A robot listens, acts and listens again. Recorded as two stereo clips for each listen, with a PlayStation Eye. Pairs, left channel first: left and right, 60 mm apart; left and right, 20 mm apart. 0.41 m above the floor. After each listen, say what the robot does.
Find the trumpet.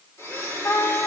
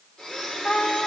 Turn 70° left.
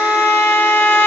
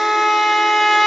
Turn 35° left.
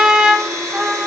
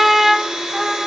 Turn 10° right.
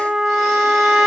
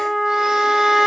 Facing the trumpet.